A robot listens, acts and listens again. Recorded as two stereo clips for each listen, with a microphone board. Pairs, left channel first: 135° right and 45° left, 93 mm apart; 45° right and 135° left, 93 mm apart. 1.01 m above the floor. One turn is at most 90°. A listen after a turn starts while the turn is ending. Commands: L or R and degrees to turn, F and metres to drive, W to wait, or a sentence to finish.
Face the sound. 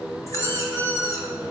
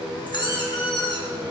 R75
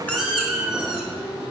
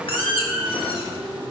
R40
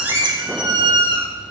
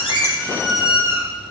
L10
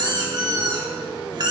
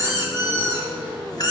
Found it: a squeak, straight ahead.